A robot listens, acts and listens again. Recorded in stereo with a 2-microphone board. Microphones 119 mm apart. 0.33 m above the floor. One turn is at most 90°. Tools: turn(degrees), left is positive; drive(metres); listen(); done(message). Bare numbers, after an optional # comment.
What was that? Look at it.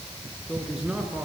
turn(-30)
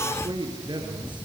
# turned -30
# So it is at 140° right.
turn(-90)
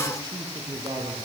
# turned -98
# The man speaking is now 35° right.
turn(-35)
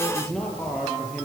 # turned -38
done("Found it: a man speaking, straight ahead.")